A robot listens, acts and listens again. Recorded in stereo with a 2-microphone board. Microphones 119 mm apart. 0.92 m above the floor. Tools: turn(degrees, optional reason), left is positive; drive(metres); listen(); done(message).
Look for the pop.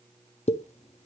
turn(degrees=70, reason="The pop: about 70° left or 110° left.")
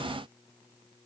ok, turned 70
listen()
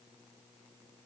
done("I heard a pop, but can't make it out now. It was about straight ahead or 40° left.")